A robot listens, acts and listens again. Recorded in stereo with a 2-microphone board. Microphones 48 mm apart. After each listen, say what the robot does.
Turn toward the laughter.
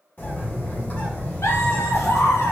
Turn 90° left.
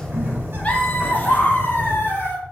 Turn 50° left.
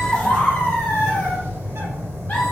Turn 35° left.
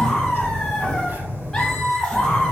Turn 10° left.
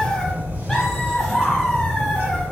Facing the laughter, 1 to 2 m away.